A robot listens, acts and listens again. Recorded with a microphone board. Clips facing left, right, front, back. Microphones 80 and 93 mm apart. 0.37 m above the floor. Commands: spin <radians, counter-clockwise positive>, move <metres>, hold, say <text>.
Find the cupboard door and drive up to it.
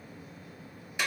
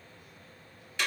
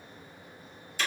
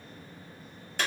hold
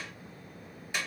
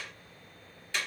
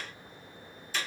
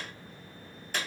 hold
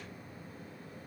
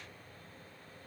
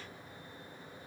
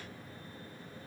say I can't make out a cupboard door, only a clap.